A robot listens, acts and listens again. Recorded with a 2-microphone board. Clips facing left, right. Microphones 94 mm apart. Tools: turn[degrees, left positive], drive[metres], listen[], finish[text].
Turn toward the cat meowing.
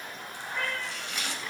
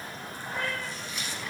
Thought: The cat meowing: about 35° right or 145° right.
Action: turn[-35]
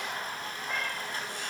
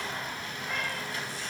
Action: listen[]
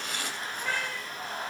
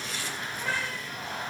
Action: finish[Found it: a cat meowing, straight ahead.]